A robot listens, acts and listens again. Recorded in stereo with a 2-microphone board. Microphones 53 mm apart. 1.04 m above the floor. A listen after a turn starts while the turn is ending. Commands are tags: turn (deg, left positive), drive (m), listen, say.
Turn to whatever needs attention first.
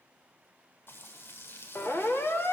<turn deg="50"/>
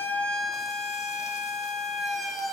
<say>Found it: a siren, straight ahead.</say>